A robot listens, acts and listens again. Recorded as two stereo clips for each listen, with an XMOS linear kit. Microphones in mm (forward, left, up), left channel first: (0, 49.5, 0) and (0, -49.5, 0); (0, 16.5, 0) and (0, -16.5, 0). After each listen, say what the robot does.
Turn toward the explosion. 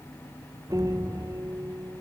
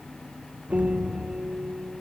Turn 40° right.
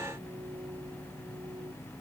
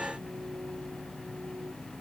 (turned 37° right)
Keep listening.
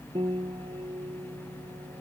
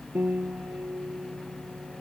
I heard an explosion, but can't make it out now. It was about 5° right or 100° right.